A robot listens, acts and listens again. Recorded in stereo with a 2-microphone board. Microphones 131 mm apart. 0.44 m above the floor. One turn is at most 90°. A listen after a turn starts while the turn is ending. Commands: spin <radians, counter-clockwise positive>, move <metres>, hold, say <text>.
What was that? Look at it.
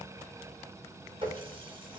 spin -0.70
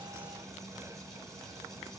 hold
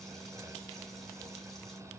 hold
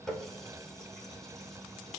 say Facing the running tap, 2 to 4 m away.